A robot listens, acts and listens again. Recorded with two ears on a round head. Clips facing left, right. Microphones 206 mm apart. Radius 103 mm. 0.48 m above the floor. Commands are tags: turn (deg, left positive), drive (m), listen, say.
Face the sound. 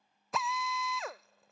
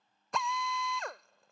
<turn deg="30"/>
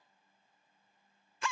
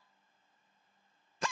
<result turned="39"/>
<turn deg="-40"/>
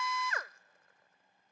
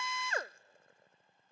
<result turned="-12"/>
<turn deg="-25"/>
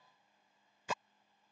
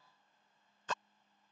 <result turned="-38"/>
<turn deg="10"/>
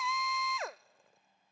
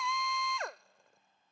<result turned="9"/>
<say>Facing the drill.</say>